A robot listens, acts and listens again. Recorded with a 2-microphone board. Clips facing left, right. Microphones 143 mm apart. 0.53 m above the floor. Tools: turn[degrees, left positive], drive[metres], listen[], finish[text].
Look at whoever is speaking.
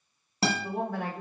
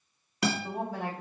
Thought: The woman speaking: about 55° left or 125° left.
Action: turn[55]
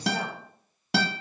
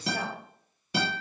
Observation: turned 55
Action: listen[]
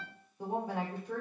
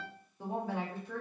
Thought: So it is at 20° left.
Action: turn[20]
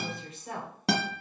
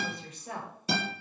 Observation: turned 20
Action: finish[Found it: a woman speaking, straight ahead.]